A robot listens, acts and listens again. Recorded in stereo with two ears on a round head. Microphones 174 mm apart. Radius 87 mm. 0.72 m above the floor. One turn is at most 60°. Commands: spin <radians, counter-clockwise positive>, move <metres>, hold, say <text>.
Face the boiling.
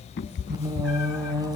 hold
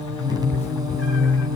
hold
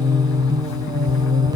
say I can't make out boiling to turn to.